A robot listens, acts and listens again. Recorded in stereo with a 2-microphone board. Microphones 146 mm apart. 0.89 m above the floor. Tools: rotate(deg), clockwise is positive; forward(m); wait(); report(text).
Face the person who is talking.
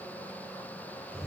wait()
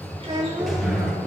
rotate(40)
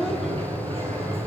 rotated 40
wait()
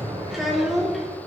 report("Facing the child speaking.")